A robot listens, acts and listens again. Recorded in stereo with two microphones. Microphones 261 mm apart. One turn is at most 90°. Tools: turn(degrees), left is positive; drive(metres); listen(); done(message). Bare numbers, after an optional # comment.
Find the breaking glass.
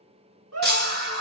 # The breaking glass: about 40° right or 140° right.
turn(-40)
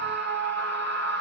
listen()
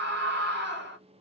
done("I heard breaking glass, but can't make it out now. It was about straight ahead or 100° right.")